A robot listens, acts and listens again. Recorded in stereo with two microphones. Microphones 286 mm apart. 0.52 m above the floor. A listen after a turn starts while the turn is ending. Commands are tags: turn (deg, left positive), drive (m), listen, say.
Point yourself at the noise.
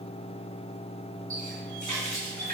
<turn deg="-90"/>
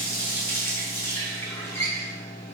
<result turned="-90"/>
<turn deg="10"/>
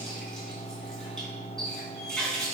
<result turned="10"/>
<say>Facing the running tap.</say>